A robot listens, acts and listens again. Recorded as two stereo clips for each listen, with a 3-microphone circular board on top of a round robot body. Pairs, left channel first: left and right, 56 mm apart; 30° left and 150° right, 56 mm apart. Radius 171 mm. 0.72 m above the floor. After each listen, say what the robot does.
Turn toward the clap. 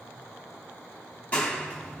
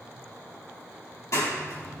Turn 35° left.
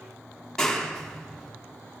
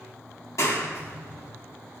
Turn 15° left.
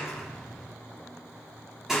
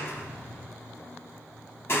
Facing the clap.